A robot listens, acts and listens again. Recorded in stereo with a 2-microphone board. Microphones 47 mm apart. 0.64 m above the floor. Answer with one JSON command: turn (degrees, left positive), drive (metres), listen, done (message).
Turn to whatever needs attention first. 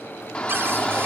{"turn": 20}
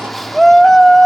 {"done": "Found it: a shout, straight ahead, 1 to 2 m away."}